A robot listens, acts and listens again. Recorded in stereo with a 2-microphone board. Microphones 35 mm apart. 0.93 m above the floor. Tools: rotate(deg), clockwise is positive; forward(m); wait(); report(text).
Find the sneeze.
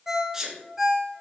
rotate(15)
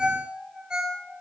wait()
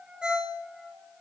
report("I heard a sneeze, but can't make it out now. It was about straight ahead or 150° right.")